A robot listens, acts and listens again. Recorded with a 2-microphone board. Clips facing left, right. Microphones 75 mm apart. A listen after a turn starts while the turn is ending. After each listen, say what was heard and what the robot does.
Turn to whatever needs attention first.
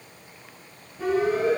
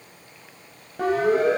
The siren: about 70° right or 110° right. Turn 70° right.
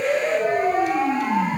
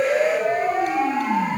Found it: a siren, straight ahead, over 4 m away.